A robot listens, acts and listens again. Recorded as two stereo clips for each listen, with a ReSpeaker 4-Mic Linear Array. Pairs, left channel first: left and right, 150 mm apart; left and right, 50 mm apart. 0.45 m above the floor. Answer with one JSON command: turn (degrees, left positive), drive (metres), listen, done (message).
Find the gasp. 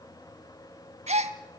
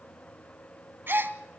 {"turn": -50}
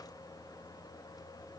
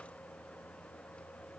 {"listen": true}
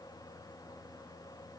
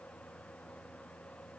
{"done": "I heard a gasp, but can't make it out now. It was about straight ahead or 80° right."}